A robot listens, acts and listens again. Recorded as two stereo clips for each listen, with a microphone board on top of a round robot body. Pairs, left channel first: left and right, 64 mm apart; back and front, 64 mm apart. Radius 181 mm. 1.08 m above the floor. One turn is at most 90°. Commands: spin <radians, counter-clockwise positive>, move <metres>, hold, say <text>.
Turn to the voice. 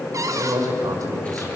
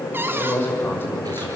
spin -1.57
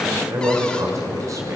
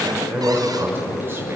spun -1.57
spin -0.96
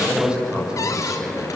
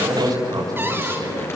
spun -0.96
spin -0.17
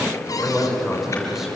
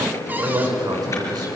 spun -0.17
say Facing the man speaking, over 4 m away.